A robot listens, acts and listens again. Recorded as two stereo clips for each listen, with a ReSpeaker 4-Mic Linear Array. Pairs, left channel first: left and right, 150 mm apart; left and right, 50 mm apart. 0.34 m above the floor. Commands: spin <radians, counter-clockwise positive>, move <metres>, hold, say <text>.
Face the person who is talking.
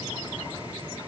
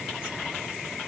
hold
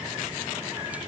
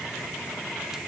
hold
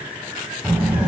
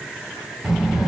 spin -0.52
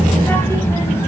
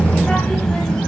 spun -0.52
spin 0.35
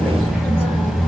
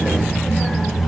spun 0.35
say Facing the child speaking, 1 to 2 m away.